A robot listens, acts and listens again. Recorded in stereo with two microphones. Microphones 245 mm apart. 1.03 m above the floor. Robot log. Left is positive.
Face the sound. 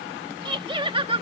note: The laughter: about 25° right or 155° right.
cmd yaw -25
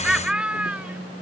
end: Found it: laughter, straight ahead.